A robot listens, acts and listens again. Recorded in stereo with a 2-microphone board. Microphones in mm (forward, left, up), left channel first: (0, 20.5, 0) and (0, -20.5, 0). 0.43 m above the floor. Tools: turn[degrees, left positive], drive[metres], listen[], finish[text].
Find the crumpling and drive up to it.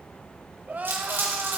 Thought: The crumpling: about 60° right or 120° right.
Action: turn[-60]
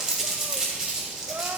Thought: So it is at 20° right.
Action: turn[-20]
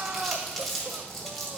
Action: drive[1.0]
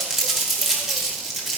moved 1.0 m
Action: drive[1.0]
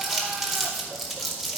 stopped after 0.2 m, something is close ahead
Thought: The crumpling is now 10° right.
Action: turn[-10]
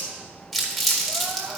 Action: finish[Arrived at the crumpling, straight ahead.]